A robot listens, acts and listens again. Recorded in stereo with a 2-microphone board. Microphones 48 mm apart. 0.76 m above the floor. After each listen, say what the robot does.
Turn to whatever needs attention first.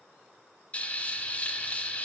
Keep listening.
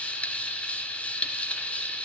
Keep listening.
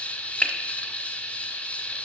I can't make out anything urgent, only frying.